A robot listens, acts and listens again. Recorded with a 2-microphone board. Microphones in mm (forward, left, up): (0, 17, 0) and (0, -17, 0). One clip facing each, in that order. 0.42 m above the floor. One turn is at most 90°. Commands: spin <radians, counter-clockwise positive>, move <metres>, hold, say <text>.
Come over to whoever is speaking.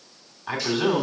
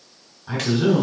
spin 0.87
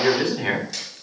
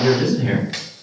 spin 1.31
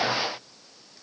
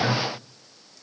move 1.0
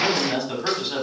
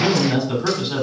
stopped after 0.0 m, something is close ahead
say Blocked. The man speaking is further on, straight ahead.